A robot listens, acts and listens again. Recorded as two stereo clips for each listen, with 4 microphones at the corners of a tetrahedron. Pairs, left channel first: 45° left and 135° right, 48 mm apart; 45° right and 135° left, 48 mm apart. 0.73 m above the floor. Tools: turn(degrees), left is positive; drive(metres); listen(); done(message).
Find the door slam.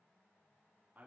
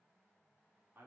listen()
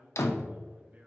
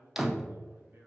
turn(degrees=50)
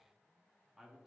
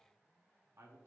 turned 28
turn(degrees=25)
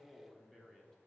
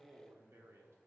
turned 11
turn(degrees=10)
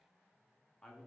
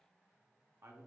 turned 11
done("Facing where the door slam came from. I can't hear it now.")